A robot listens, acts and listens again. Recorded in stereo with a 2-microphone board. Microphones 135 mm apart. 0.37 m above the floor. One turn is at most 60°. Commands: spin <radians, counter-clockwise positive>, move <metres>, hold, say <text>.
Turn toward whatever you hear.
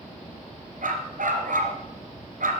spin -1.05
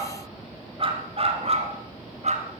spin -0.96
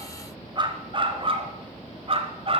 spin -0.70
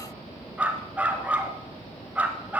spin -0.17
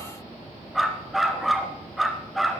say Found it: a dog barking, straight ahead, 1 to 2 m away.